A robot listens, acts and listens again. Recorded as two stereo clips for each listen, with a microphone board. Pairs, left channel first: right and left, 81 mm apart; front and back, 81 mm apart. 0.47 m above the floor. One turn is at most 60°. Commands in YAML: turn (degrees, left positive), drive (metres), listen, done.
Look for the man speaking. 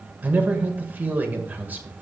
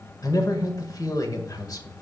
turn: 25
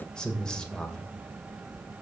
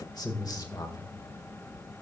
turn: -10
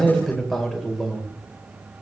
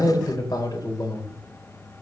done: "Found it: a man speaking, straight ahead, 1 to 2 m away."